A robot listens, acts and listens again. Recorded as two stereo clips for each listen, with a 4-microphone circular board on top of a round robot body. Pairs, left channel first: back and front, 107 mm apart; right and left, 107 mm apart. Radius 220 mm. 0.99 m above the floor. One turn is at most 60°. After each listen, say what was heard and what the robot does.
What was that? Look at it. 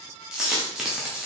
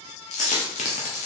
The dropped coin: 85° right. Turn 60° right.
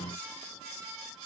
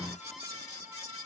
Nothing new. It was at 25° right. Turn 25° right.
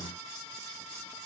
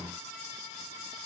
I heard a dropped coin from this way, but can't make it out now.